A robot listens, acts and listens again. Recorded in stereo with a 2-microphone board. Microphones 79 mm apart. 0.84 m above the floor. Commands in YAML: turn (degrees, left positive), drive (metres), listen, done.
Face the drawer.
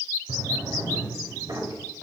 turn: -65
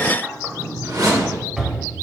done: "Found it: a drawer, straight ahead, 1 to 2 m away."